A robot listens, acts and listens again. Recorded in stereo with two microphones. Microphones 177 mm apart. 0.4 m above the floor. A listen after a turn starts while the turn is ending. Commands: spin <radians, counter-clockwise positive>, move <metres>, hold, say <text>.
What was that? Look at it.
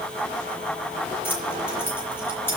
spin 0.52
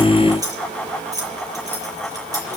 spin -0.35
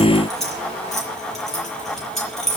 say Found it: keys jangling, straight ahead, over 4 m away.